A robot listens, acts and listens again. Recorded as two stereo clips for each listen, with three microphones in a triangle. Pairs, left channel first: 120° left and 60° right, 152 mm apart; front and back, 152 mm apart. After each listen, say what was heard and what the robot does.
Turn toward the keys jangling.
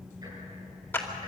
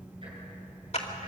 Keep listening.
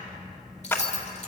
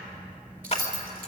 The keys jangling: 160° left. Turn 160° left.
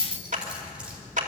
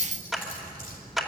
The keys jangling is now 25° left. Turn 25° left.
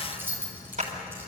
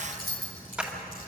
The keys jangling is now 15° left. Turn 15° left.
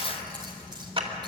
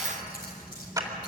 Keep listening.
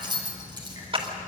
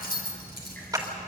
Found it: keys jangling, straight ahead.